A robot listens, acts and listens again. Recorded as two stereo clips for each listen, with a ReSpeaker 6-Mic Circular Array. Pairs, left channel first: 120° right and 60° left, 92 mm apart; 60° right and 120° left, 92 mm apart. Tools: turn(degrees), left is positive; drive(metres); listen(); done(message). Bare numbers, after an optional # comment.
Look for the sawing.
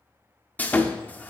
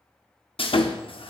# The sawing: 45° right.
turn(-45)
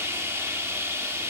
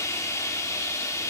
done("Found it: sawing, straight ahead.")